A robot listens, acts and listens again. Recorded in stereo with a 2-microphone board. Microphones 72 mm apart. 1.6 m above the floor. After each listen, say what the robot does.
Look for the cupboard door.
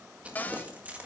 Turn 25° left.
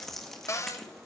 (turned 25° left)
Turn 125° left.
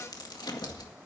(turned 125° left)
Keep listening.
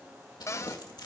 Turn 55° left.
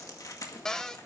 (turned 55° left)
Turn 10° left.
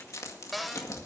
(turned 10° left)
Facing the cupboard door.